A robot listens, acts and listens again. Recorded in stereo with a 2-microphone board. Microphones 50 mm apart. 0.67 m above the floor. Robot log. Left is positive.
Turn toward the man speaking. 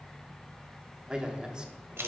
note: The man speaking: about 20° right or 160° right.
cmd yaw -20
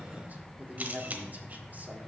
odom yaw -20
note: So it is at 140° right.
cmd yaw -140
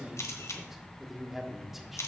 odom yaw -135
end: Found it: a man speaking, straight ahead.